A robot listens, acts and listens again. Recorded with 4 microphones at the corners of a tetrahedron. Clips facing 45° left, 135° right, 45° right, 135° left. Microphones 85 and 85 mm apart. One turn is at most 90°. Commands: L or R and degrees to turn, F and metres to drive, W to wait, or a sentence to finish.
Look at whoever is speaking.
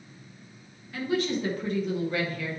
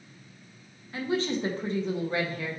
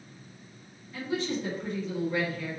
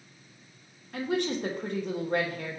L90
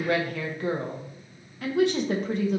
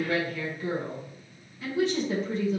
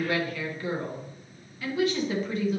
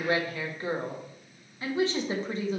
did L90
L75
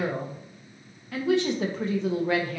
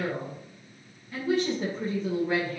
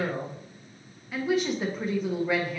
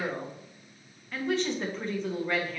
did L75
L35
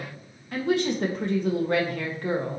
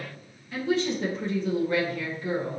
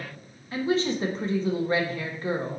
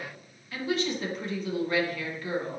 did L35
L10
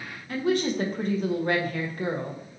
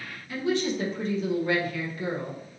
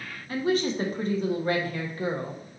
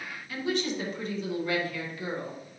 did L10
Facing the woman speaking, 1 to 2 m away.